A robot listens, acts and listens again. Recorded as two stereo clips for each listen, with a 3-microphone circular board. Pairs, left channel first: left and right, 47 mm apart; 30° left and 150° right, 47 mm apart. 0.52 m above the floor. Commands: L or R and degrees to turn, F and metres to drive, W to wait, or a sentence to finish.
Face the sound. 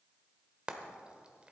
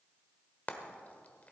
R25
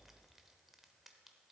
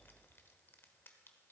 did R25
W
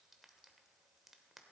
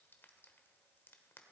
W
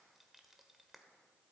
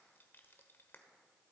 Facing where the frying came from. I can't hear it now.